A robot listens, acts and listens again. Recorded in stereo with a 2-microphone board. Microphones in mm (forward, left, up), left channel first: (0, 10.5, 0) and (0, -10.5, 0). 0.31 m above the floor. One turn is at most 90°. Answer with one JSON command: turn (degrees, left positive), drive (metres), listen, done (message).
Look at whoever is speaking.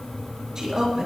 {"turn": -30}
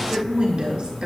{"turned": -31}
{"turn": -90}
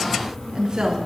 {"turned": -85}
{"turn": -40}
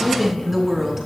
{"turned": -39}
{"turn": -10}
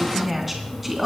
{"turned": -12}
{"turn": -10}
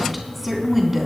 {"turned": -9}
{"turn": -10}
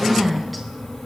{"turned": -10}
{"done": "Found it: a woman speaking, straight ahead, 2 to 4 m away."}